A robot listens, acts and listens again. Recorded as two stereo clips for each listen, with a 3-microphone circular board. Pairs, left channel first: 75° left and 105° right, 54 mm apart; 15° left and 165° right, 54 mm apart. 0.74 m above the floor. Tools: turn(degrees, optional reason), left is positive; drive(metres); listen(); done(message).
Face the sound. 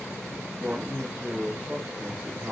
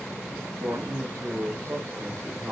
turn(degrees=-165, reason="The man speaking: 165° right.")
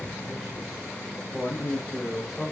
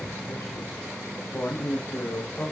turn(degrees=-25, reason="The man speaking is now 25° right.")
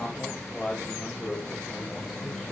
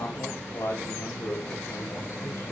turn(degrees=-10, reason="The man speaking is now 10° right.")
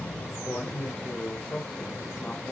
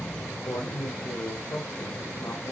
done("Facing the man speaking, 2 to 4 m away.")